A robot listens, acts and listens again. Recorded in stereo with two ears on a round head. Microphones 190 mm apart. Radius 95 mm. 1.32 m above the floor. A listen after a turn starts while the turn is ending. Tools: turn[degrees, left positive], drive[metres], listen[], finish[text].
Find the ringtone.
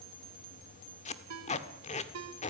Action: turn[-90]
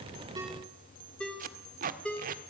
Action: finish[Facing the ringtone, 2 to 4 m away.]